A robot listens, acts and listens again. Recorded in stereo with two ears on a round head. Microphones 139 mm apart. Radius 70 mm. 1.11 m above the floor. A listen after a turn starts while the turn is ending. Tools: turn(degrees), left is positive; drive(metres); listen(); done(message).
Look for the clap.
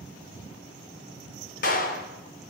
turn(degrees=60)
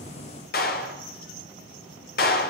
turn(degrees=60)
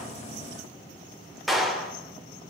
done("Facing the clap, 2 to 4 m away.")